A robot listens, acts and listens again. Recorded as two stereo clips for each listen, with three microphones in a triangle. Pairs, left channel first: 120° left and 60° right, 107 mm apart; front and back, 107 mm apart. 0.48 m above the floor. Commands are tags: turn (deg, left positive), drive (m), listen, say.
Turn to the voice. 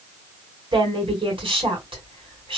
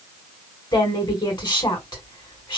<turn deg="-35"/>
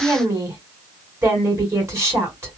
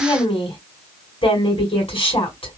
<say>Found it: a woman speaking, straight ahead, 1 to 2 m away.</say>